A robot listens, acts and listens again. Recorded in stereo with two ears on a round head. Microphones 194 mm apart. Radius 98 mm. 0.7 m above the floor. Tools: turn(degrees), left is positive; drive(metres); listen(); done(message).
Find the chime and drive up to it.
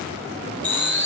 turn(degrees=30)
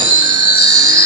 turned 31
turn(degrees=-20)
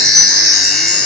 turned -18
drive(metres=1.0)
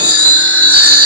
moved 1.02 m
turn(degrees=-10)
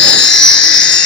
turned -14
drive(metres=1.0)
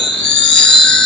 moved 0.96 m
drive(metres=1.0)
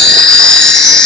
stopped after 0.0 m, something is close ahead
done("Arrived at the chime, straight ahead.")